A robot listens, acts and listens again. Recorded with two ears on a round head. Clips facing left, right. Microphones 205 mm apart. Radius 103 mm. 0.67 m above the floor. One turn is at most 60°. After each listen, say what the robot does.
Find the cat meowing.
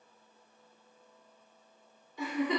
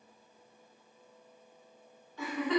Keep listening.
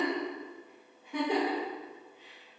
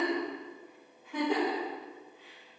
Keep listening.
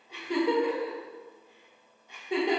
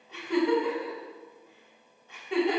I can't make out a cat meowing, only a giggle.